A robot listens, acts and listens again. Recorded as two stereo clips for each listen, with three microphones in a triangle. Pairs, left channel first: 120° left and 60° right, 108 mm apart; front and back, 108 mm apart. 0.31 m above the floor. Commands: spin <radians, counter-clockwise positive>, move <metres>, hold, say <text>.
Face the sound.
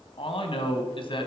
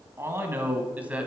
spin 1.83
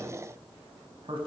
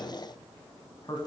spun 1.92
spin -0.70
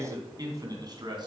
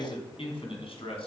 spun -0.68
spin -0.35
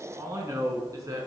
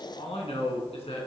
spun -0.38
say Facing the man speaking, 2 to 4 m away.